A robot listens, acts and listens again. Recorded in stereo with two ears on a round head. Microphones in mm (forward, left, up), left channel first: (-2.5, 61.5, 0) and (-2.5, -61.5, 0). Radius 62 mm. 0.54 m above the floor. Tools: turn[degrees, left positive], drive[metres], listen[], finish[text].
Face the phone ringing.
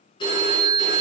Thought: The phone ringing: about 35° left or 145° left.
Action: turn[35]
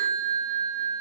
Action: finish[Found it: a phone ringing, straight ahead.]